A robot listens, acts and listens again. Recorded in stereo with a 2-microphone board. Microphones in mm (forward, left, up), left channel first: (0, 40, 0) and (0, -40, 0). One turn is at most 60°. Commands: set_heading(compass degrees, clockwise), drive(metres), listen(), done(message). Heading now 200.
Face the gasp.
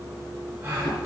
set_heading(225)
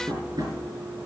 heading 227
listen()
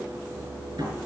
done("I heard a gasp, but can't make it out now. It was about straight ahead or 125° right.")